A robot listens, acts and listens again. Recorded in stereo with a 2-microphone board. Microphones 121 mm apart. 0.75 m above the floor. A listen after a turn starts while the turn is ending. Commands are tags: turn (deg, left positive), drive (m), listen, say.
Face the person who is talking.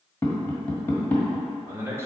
<turn deg="-25"/>
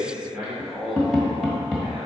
<say>Found it: a man speaking, straight ahead.</say>